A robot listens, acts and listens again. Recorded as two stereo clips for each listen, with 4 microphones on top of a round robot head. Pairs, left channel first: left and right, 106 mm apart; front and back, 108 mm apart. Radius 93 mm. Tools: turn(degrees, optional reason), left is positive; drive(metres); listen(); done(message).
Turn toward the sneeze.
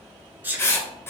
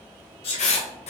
turn(degrees=-20, reason="The sneeze: 20° right.")
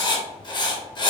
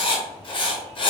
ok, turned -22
done("I heard a sneeze from this way, but can't make it out now.")